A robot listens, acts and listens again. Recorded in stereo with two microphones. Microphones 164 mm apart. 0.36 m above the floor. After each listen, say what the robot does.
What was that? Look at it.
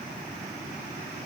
Keep listening.
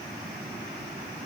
Keep listening.
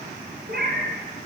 Turn 70° right.
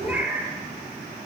Turn 10° right.
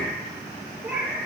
Turn 10° right.
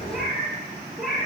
Facing the cat meowing, over 4 m away.